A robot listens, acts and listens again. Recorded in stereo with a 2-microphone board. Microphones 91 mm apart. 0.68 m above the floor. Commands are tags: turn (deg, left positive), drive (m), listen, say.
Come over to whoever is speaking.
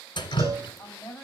<turn deg="20"/>
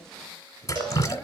<listen/>
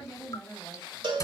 <drive m="1.0"/>
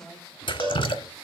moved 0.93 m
<listen/>
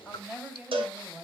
<drive m="1.0"/>
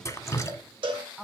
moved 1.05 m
<drive m="1.0"/>
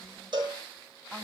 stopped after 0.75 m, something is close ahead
<listen/>
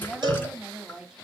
<turn deg="-10"/>
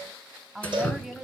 <say>Arrived at the woman speaking, straight ahead.</say>